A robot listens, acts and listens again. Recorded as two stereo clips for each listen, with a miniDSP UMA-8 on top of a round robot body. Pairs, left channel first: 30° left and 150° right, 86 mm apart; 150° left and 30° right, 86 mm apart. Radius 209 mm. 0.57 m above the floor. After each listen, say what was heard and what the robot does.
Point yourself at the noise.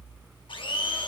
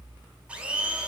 The blender: 45° left. Turn 45° left.
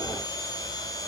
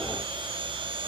The blender is now 15° right. Turn 15° right.
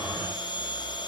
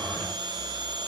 Facing the blender.